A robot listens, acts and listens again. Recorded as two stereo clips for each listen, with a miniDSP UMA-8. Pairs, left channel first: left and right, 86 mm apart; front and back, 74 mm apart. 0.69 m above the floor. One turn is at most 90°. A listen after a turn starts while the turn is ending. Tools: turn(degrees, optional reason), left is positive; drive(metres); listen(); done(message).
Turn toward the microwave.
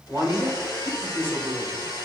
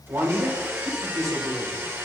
listen()
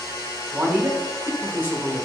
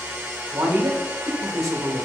listen()
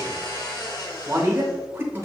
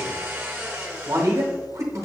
done("I can't make out a microwave to turn to.")